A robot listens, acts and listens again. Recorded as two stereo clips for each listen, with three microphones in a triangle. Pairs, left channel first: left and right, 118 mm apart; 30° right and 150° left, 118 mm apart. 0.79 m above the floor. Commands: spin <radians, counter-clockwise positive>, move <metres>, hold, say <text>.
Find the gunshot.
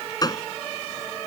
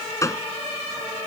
spin 0.61
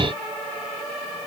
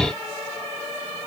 say I heard a gunshot from this way, but can't make it out now.